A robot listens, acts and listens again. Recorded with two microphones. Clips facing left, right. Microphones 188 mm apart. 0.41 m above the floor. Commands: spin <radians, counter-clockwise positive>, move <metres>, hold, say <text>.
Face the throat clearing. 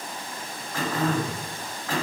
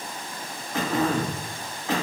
spin -0.44
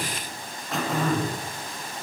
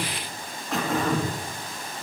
say Facing the throat clearing.